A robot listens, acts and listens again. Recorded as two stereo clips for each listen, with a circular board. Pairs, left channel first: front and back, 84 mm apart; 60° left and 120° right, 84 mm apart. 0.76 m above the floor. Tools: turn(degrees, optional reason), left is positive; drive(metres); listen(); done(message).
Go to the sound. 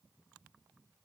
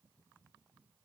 listen()
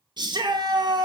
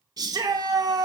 turn(degrees=-160, reason="The shout: 160° right.")
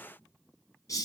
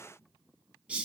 turn(degrees=-45, reason="The shout is now 45° right.")
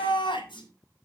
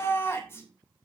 drive(metres=1.0)
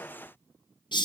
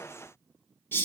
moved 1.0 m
drive(metres=1.0)
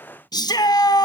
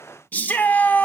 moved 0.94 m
drive(metres=1.0)
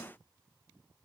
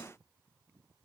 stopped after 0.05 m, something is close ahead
listen()
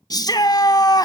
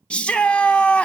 turn(degrees=-15, reason="The shout is now 15° right.")
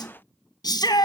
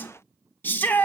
done("I am next to the shout.")